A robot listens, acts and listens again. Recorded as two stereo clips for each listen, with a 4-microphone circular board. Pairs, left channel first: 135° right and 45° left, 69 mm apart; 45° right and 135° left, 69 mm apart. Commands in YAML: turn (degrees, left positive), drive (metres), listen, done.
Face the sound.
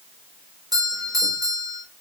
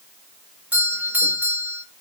turn: 70
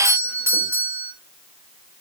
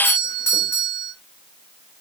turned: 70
done: "Found it: a doorbell, straight ahead."